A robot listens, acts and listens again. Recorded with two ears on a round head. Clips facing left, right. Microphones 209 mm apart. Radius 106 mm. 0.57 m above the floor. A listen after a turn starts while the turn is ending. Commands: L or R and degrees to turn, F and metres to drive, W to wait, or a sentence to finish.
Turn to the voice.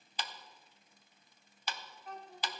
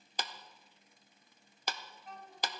L50
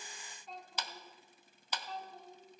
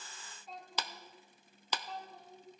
Facing the child speaking.